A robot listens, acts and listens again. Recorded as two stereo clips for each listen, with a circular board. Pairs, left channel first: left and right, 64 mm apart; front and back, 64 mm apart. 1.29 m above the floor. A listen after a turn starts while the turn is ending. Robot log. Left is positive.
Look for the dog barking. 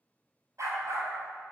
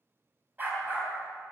note: The dog barking: 120° right.
cmd yaw -120
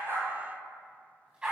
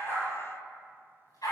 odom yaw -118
note: The dog barking is now 15° right.
cmd yaw -15
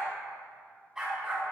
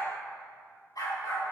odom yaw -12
note: The dog barking is now 10° right.
cmd yaw -10
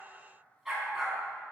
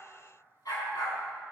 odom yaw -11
end: Found it: a dog barking, straight ahead.